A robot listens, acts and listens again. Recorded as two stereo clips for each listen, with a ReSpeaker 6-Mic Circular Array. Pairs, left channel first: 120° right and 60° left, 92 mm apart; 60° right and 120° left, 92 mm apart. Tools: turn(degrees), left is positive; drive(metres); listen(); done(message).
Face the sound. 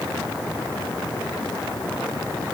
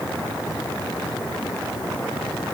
listen()
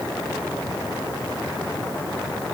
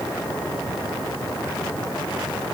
listen()
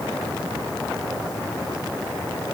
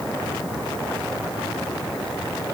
done("I can't make out anything to turn to.")